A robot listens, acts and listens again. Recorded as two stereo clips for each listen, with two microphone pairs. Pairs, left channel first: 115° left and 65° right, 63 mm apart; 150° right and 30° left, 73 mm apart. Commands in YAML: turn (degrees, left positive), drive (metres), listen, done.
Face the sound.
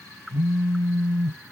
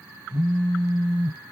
turn: -95
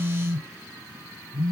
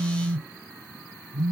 done: "Facing the phone buzzing."